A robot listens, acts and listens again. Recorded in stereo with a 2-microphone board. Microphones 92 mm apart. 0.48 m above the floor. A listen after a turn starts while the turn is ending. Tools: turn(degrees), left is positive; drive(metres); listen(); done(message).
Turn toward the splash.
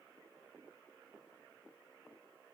listen()
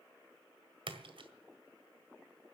turn(degrees=-65)
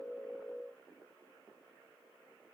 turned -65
listen()
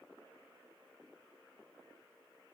done("I heard a splash, but can't make it out now. It was about straight ahead or 50° right.")